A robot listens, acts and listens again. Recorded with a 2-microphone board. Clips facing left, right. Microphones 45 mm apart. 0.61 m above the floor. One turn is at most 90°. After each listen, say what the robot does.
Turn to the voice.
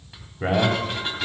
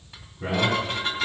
Turn 70° left.
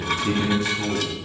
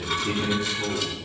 Turn 45° left.
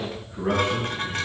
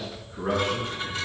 Turn 10° left.
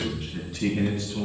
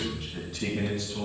Found it: a man speaking, straight ahead, over 4 m away.